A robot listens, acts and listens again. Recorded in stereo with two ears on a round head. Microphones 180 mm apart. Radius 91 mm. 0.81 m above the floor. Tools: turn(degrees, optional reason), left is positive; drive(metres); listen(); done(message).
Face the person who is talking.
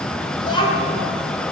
turn(degrees=25, reason="The child speaking: about 25° left or 155° left.")
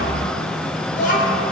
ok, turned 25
turn(degrees=130, reason="So it is at 130° left.")
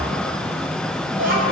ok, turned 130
turn(degrees=-50, reason="The child speaking is now 50° right.")
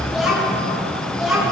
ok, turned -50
done("Facing the child speaking, 2 to 4 m away.")